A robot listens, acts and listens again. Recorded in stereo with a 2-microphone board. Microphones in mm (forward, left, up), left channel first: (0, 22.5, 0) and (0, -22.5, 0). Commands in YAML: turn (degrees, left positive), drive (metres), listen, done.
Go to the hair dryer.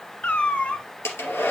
turn: 90
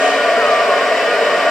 drive: 1.0
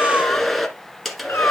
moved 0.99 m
drive: 1.0
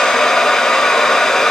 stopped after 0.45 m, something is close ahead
turn: 10
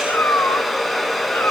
done: "Arrived at the hair dryer, straight ahead."